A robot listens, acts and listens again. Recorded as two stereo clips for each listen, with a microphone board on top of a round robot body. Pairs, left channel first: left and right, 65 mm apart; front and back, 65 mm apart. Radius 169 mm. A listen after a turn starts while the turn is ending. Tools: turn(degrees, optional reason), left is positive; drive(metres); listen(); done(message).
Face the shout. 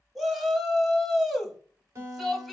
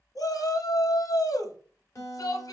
done("Facing the shout, 1 to 2 m away.")